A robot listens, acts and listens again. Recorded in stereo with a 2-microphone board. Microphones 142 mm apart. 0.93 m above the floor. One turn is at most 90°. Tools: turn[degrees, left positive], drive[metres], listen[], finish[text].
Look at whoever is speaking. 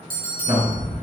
Thought: The man speaking: about 55° right or 125° right.
Action: turn[-55]
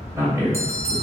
Thought: So it is at 25° right.
Action: turn[-25]
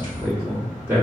Thought: The man speaking is now 20° right.
Action: turn[-20]
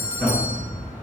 Thought: The man speaking is now 10° left.
Action: turn[10]
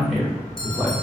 Action: finish[Found it: a man speaking, straight ahead.]